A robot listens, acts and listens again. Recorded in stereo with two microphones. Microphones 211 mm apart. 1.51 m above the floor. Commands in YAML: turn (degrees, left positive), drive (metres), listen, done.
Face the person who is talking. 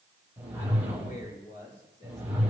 turn: 55
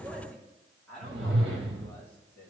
turn: 10
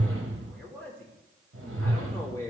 turn: 15
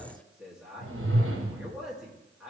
done: "Facing the man speaking, 2 to 4 m away."